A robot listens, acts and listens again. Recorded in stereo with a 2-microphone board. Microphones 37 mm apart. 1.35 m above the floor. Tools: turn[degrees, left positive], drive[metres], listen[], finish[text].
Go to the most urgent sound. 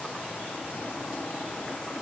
Action: listen[]
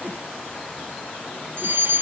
Thought: The fire alarm: about 70° right or 110° right.
Action: turn[-70]
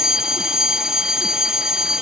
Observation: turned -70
Thought: So it is at 15° right.
Action: turn[-15]
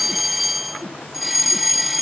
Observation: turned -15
Action: drive[1.0]
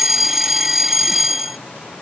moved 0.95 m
Thought: The fire alarm is now 10° right.
Action: turn[-10]
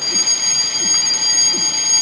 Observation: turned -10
Action: drive[1.0]
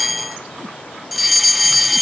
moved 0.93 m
Action: drive[1.0]
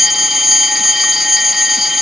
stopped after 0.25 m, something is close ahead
Thought: The fire alarm is now 10° right.
Action: turn[-10]
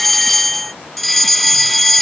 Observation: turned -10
Action: finish[I am next to the fire alarm.]